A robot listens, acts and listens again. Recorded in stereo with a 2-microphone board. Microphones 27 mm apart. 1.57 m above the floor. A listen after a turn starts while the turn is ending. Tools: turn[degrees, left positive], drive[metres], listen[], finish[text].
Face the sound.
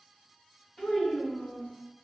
Thought: The child speaking: about 30° left or 150° left.
Action: turn[30]
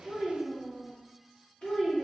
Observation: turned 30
Thought: The child speaking: about 40° left or 140° left.
Action: turn[40]
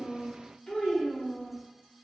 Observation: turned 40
Thought: The child speaking: about 35° left or 145° left.
Action: turn[35]
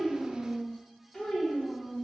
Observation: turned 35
Thought: The child speaking: about 20° left or 160° left.
Action: turn[20]
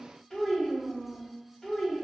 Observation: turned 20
Action: finish[Found it: a child speaking, straight ahead.]